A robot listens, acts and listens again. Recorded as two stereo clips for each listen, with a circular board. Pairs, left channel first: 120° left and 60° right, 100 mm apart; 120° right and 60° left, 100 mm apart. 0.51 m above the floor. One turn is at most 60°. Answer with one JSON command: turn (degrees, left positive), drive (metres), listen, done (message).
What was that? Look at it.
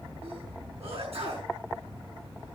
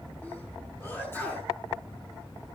{"turn": -50}
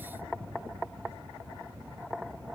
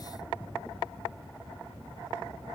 {"done": "I heard a sneeze from this way, but can't make it out now."}